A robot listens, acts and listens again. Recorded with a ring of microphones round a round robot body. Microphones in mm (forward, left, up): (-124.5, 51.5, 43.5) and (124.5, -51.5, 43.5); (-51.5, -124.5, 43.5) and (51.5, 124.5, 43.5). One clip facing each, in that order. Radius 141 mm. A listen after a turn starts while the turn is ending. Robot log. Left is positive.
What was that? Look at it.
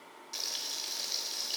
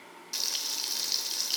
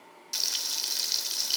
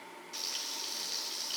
note: The frying: 90° right.
cmd yaw -90
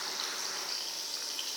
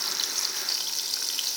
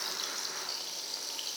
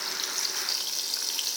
end: Facing the frying, under 1 m away.